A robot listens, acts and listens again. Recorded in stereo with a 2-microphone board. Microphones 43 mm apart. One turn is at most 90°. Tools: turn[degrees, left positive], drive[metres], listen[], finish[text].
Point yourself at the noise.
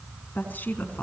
Thought: The woman speaking: about 40° left or 140° left.
Action: turn[40]
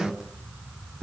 Action: finish[Found it: a woman speaking, straight ahead.]